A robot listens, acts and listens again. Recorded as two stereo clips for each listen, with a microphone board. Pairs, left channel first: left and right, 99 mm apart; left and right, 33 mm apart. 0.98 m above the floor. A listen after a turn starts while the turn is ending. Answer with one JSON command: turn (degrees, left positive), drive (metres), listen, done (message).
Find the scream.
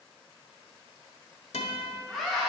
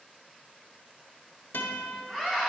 {"turn": 30}
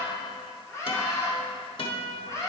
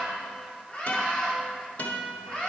{"turn": 150}
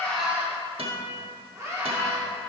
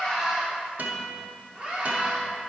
{"turn": -25}
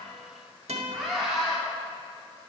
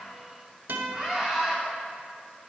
{"done": "Found it: a scream, straight ahead, 2 to 4 m away."}